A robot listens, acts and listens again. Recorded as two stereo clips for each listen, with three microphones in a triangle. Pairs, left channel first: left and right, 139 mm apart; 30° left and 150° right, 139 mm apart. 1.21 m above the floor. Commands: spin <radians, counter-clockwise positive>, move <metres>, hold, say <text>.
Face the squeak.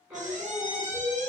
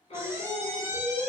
spin -1.40
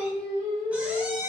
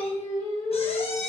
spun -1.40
spin -0.17
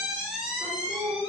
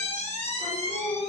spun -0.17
say Facing the squeak, under 1 m away.